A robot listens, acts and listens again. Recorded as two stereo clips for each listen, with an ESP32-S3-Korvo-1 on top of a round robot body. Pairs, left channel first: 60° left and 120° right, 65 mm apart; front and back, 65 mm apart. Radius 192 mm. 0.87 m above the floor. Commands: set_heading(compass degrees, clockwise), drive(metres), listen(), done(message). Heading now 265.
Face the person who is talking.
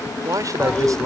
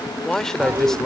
set_heading(345)
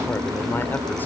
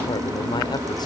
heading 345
listen()
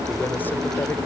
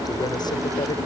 listen()
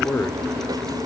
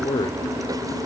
done("Facing where the man speaking came from. I can't hear it now.")